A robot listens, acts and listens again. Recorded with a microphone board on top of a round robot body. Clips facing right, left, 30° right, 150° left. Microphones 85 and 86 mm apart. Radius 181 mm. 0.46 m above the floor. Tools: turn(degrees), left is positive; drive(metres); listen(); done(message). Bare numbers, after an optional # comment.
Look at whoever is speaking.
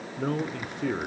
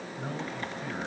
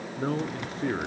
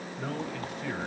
# The man speaking: 80° right.
turn(-80)
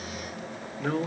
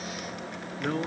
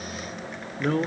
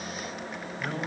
done("Facing the man speaking, 1 to 2 m away.")